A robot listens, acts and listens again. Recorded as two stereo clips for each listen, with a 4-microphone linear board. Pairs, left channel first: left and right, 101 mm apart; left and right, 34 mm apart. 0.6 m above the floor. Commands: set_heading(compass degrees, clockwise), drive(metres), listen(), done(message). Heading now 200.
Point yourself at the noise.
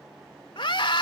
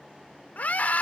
set_heading(145)
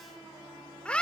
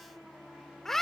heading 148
set_heading(138)
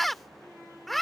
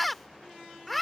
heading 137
done("Found it: a scream, straight ahead.")